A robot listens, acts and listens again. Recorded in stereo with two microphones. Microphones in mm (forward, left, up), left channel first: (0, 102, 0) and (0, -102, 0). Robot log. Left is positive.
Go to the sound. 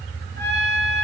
note: The trumpet: about 60° right or 120° right.
cmd yaw -60
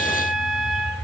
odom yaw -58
cmd fwd 1.0
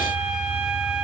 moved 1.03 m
cmd idle
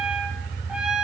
cmd fwd 1.0
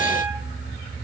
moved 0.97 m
cmd idle
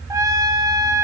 note: The trumpet is now 15° right.
cmd yaw -15
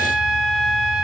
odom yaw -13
cmd fwd 1.0
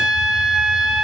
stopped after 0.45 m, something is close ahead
end: Arrived at the trumpet, straight ahead.